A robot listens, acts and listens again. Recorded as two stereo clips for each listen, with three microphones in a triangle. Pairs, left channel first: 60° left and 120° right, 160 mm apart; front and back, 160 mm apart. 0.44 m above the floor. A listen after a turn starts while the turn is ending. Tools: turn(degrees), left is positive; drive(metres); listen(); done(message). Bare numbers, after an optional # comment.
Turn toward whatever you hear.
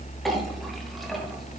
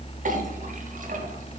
listen()
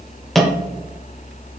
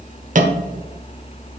# The clink: 150° left.
turn(150)
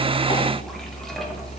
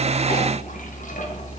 listen()
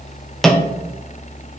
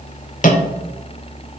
# The clink is now 25° right.
turn(-25)
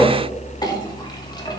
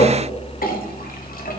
done("Facing the clink.")